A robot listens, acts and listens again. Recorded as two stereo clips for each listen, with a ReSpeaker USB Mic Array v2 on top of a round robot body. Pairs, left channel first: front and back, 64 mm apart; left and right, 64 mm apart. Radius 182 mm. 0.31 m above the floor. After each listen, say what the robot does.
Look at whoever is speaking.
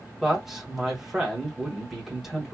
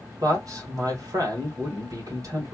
Turn 95° right.
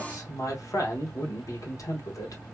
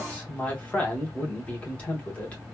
Turn 20° left.
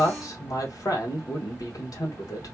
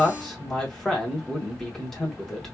Turn 10° left.
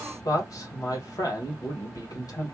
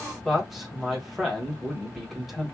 Facing the man speaking.